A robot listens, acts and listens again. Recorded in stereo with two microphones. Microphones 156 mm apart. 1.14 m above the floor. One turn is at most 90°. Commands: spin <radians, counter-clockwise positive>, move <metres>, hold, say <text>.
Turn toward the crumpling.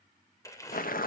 spin 0.35
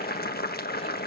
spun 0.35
hold
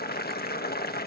hold
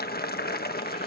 say I heard crumpling, but can't make it out now. It was about straight ahead or 140° left.